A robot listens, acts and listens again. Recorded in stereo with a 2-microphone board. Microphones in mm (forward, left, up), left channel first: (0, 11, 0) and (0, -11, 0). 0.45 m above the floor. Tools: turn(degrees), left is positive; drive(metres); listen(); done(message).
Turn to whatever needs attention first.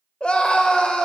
turn(degrees=55)
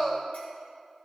turn(degrees=15)
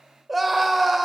done("Facing the scream.")